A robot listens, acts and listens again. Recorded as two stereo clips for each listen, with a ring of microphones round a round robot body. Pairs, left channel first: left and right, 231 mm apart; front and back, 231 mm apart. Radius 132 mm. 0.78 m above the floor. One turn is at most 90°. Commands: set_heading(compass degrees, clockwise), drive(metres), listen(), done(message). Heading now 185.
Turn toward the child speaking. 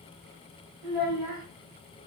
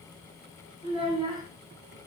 set_heading(275)
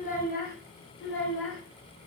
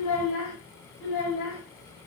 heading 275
set_heading(220)
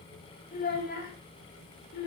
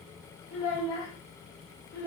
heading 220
set_heading(180)
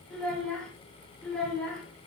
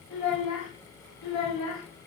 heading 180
done("Found it: a child speaking, straight ahead, 1 to 2 m away.")